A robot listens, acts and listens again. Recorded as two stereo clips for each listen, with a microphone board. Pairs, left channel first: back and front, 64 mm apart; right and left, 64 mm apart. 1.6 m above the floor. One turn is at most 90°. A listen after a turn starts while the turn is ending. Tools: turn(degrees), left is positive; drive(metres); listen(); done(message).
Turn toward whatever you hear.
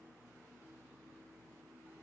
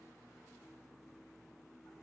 listen()
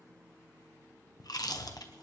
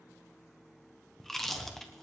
turn(degrees=-90)
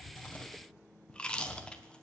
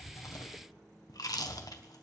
turn(degrees=-90)
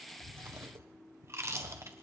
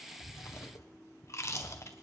turn(degrees=-45)
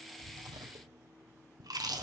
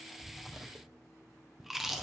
done("Facing the chewing.")